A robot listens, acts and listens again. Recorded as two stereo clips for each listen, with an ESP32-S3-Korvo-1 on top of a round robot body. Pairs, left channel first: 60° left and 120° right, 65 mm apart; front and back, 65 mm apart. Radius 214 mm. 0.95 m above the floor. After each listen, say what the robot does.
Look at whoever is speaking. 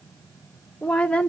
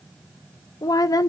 Turn 10° right.
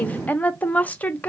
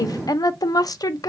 Facing the woman speaking, under 1 m away.